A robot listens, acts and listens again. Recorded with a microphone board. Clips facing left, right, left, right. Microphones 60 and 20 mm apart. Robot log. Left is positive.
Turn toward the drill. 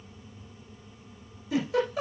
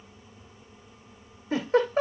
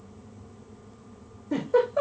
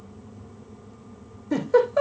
cmd idle
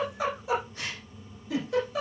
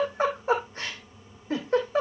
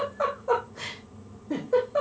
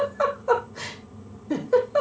cmd idle
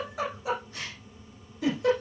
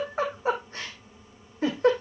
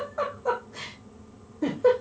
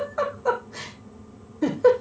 end: I can't make out a drill to turn to.